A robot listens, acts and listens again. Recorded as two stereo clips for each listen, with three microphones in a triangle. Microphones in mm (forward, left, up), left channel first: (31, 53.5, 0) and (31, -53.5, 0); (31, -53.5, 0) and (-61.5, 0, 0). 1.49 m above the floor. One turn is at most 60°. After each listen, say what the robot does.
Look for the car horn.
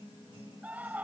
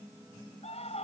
Keep listening.
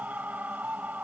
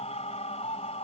Keep listening.
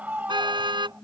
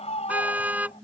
Turn 60° right.
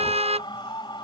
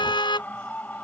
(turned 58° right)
Turn 60° right.
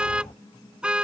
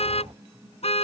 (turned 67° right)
Turn 10° right.
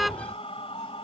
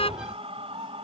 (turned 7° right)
Found it: a car horn, straight ahead.